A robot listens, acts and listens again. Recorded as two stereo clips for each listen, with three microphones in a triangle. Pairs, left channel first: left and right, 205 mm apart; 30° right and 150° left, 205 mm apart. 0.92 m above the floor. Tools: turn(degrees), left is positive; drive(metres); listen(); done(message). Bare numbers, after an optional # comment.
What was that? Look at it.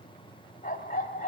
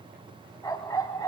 # The dog barking: 40° left.
turn(40)
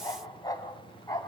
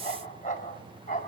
# The dog barking is now 20° left.
turn(20)
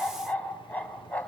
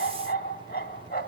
done("Facing the dog barking.")